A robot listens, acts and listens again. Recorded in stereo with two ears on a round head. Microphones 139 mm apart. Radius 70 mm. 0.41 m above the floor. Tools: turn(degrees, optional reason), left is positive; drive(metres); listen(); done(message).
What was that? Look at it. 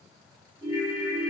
turn(degrees=50, reason="The ringtone: about 50° left or 130° left.")
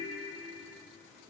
turn(degrees=75, reason="So it is at 75° left.")
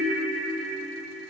done("Found it: a ringtone, straight ahead, 1 to 2 m away.")